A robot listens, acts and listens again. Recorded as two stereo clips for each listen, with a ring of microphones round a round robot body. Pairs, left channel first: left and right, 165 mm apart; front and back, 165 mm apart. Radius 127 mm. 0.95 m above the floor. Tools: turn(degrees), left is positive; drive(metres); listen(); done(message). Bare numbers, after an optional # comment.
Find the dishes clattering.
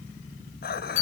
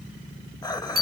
# The dishes clattering: 70° left.
turn(70)
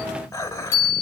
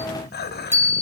# The dishes clattering is now 20° left.
turn(20)
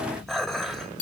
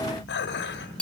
done("Found it: dishes clattering, straight ahead, 2 to 4 m away.")